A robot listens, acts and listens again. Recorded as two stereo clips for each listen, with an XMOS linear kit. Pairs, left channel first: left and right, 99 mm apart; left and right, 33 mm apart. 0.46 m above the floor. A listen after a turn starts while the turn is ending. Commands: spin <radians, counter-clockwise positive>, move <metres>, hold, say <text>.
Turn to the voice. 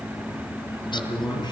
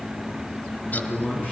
spin 0.87
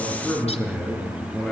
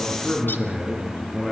say Facing the man speaking.